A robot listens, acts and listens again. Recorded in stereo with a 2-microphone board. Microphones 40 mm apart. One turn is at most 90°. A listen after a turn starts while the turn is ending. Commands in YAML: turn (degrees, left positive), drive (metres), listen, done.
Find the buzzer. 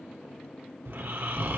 listen: true
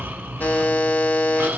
turn: 55
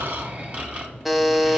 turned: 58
done: "Found it: a buzzer, straight ahead, under 1 m away."